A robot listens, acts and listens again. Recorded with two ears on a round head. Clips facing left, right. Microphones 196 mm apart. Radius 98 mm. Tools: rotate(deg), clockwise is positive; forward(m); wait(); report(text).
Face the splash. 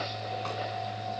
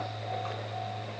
wait()
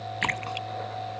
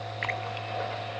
rotate(-70)
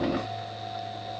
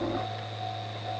wait()
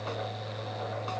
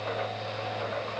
report("I heard a splash, but can't make it out now. It was about straight ahead or 40° left.")